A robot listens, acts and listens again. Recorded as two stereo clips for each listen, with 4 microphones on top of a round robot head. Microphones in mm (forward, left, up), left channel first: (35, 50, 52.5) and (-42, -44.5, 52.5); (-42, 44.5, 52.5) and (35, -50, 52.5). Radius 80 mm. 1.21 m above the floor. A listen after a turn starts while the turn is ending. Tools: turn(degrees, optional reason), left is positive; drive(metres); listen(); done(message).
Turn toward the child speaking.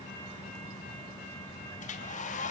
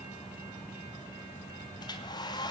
listen()
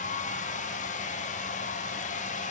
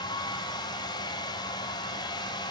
listen()
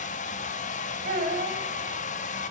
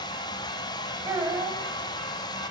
turn(degrees=-115, reason="The child speaking: 115° right.")
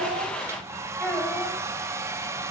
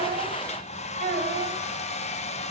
turn(degrees=-25, reason="The child speaking is now 25° right.")
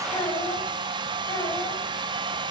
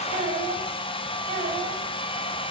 turn(degrees=-10, reason="The child speaking is now 10° right.")
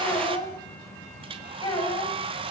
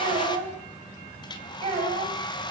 done("Found it: a child speaking, straight ahead.")